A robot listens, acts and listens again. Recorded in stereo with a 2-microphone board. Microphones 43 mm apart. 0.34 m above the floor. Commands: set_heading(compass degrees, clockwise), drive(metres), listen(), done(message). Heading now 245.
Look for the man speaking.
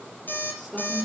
set_heading(215)
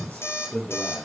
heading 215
set_heading(65)
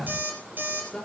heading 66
set_heading(56)
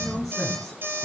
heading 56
done("Facing the man speaking, over 4 m away.")